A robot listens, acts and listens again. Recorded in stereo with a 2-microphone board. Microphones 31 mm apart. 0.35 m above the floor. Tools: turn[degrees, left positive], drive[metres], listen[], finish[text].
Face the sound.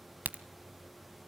Action: turn[-90]
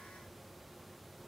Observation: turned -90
Action: finish[Facing where the crack came from. I can't hear it now.]